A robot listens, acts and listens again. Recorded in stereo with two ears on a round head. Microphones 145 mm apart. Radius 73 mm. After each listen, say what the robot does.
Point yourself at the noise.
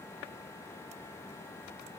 Keep listening.
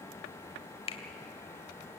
Turn 35° left.
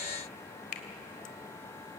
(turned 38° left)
Turn 100° left.
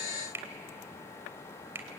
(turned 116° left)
Turn 15° right.
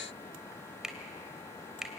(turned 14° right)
Found it: a finger snap, straight ahead.